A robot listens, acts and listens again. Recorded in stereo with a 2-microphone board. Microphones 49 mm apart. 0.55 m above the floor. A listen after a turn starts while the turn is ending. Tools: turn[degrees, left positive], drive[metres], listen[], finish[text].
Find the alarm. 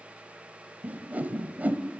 Action: listen[]
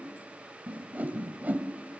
Action: listen[]
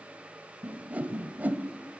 Action: finish[I can't make out an alarm to turn to.]